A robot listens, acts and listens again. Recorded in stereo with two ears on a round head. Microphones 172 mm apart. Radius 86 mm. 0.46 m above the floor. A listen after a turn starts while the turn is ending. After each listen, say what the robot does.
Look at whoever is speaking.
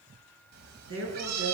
Turn 90° right.
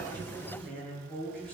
Facing the woman speaking, over 4 m away.